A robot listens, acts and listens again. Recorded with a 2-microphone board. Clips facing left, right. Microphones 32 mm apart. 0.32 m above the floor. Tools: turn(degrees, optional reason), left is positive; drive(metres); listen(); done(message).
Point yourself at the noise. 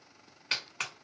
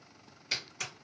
turn(degrees=55, reason="The clap: about 55° left or 125° left.")
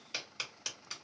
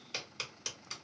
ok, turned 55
done("Found it: a clap, straight ahead.")